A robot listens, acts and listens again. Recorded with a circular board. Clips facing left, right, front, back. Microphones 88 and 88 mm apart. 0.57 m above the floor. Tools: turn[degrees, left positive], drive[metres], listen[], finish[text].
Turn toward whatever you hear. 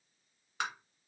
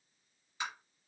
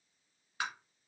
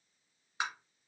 Thought: The tapping: 110° left.
Action: turn[110]
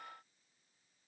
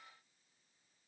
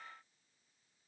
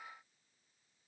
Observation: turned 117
Action: listen[]
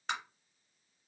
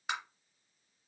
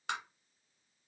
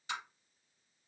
Action: finish[Found it: tapping, straight ahead.]